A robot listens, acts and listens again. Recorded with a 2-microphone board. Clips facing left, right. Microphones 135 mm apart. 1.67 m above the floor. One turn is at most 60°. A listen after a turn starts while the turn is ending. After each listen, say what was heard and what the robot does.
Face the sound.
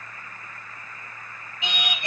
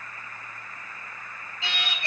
The singing: about 15° left or 165° left. Turn 15° left.
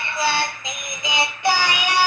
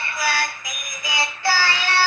Turn 30° left.
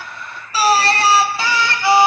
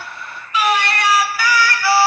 The singing: about 20° left or 160° left. Turn 20° left.
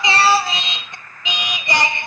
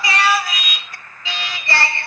The singing: about 20° left or 160° left. Turn 20° left.
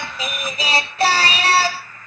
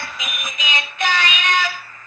So it is at 140° left. Turn 60° left.
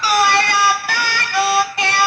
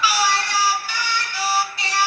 The singing is now 80° left. Turn 60° left.
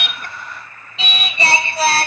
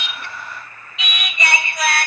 The singing is now 35° left. Turn 35° left.
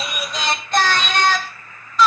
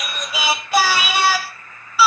The singing is now 10° right. Turn 10° right.
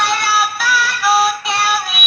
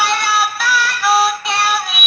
Facing the singing.